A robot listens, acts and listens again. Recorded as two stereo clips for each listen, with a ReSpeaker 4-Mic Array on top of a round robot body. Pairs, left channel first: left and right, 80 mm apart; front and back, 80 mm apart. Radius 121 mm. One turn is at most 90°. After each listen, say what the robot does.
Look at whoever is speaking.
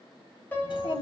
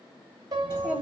Turn 90° left.
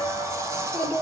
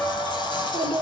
Turn 20° left.
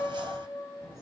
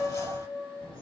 Facing the child speaking, over 4 m away.